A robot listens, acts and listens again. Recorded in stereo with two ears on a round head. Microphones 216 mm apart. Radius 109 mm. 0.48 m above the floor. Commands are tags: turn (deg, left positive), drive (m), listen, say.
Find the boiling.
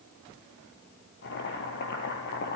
<turn deg="50"/>
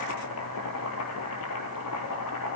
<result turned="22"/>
<turn deg="110"/>
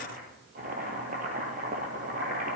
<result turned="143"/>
<turn deg="-35"/>
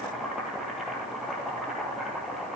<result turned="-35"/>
<say>Found it: boiling, straight ahead.</say>